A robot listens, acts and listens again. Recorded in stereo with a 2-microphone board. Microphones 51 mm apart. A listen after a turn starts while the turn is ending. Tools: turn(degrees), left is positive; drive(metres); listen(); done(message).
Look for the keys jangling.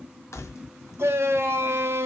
turn(degrees=60)
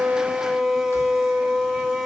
listen()
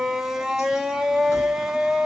listen()
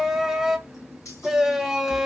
turn(degrees=75)
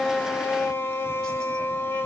listen()
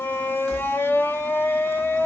listen()
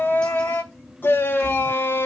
done("Facing where the keys jangling came from. I can't hear it now.")